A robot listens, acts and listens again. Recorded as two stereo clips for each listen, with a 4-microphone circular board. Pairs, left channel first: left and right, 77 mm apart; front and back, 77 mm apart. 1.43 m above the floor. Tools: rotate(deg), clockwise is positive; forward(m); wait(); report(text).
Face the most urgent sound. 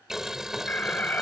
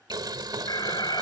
rotate(-25)
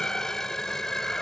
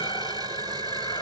rotate(-10)
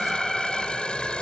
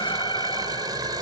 report("Found it: an alarm, straight ahead.")